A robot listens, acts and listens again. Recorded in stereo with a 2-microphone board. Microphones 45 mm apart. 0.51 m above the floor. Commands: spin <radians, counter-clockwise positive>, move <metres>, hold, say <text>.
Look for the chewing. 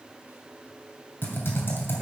hold
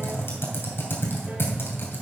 hold
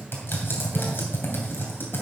say I can't make out chewing, only typing on a keyboard.